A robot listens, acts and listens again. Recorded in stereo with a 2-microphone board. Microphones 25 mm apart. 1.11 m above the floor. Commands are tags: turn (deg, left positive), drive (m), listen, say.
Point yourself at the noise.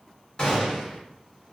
<turn deg="40"/>
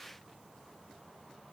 <listen/>
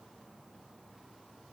<say>I heard a gunshot, but can't make it out now. It was about straight ahead or 100° left.</say>